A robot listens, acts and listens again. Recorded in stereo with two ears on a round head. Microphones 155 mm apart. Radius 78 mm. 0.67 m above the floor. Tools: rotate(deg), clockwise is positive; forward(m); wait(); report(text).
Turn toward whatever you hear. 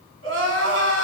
rotate(90)
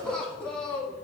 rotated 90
report("Facing the crying.")